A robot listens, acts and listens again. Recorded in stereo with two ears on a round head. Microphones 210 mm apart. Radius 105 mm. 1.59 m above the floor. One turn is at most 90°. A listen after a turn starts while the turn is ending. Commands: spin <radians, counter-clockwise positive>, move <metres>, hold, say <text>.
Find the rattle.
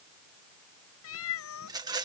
spin -0.26
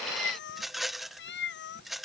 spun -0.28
say Facing the rattle.